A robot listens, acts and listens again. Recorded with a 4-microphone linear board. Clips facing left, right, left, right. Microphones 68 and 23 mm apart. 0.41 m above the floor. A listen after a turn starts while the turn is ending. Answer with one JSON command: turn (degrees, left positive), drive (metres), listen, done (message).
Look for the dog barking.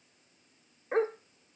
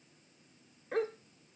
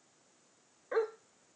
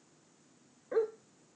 {"turn": 30}
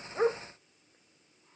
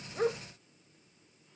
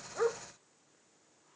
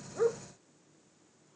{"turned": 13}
{"turn": 20}
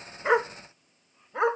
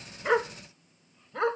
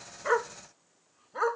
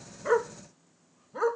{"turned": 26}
{"turn": 20}
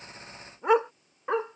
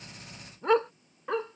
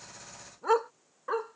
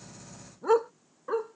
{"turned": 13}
{"turn": 20}
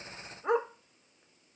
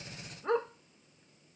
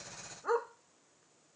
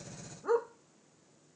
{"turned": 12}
{"turn": 15}
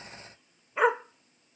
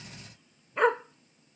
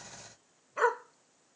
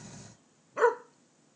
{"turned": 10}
{"turn": 30}
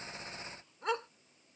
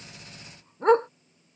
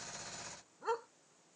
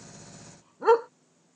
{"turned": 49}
{"turn": -40}
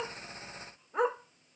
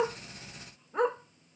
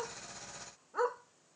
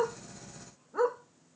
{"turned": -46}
{"done": "Found it: a dog barking, straight ahead."}